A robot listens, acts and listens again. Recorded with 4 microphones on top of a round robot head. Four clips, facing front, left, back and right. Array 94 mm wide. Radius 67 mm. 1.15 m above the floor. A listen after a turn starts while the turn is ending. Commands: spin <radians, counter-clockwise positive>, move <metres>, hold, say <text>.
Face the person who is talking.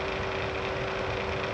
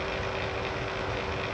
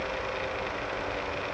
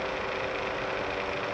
hold
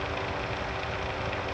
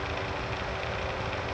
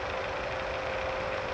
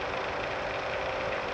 hold
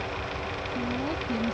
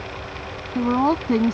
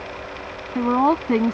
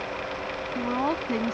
spin 2.71
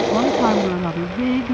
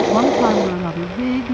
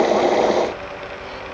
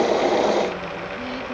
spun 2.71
spin 0.70
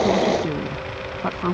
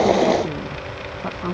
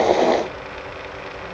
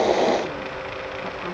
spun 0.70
hold
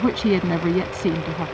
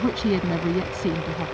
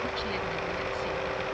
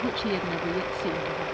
spin 0.17
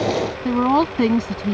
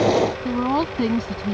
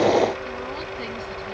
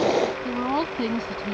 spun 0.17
say Facing the woman speaking.